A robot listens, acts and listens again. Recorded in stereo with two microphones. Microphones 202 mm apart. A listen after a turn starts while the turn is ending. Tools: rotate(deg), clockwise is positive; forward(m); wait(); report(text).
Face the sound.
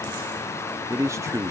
rotate(30)
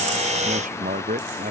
rotate(135)
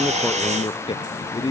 rotate(-25)
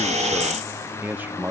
rotate(10)
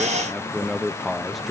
report("Facing the man speaking.")